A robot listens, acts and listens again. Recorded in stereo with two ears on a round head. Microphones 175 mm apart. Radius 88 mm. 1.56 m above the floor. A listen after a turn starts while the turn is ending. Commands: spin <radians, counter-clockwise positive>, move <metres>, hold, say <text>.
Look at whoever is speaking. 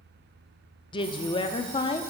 spin 0.44
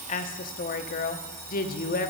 spin 2.18
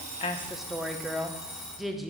say Found it: a woman speaking, straight ahead.